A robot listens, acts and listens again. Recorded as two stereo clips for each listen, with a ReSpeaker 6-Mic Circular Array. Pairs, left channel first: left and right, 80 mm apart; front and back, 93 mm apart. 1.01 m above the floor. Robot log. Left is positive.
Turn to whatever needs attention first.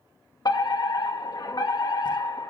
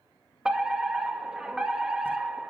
note: The fire alarm: 100° left.
cmd yaw +100
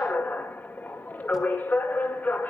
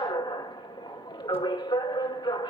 note: The fire alarm is now 25° left.
cmd yaw +25
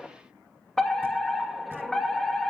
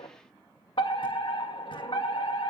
end: Found it: a fire alarm, straight ahead, 2 to 4 m away.